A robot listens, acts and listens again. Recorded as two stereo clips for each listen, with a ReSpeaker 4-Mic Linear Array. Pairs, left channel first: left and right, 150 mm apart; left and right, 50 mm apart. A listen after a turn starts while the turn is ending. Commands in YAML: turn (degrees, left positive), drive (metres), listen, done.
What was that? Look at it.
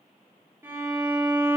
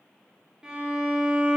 turn: -15
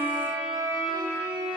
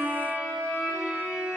turn: -145
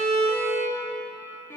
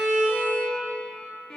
turn: 20
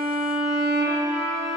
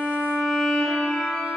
done: "Found it: a violin, straight ahead, 2 to 4 m away."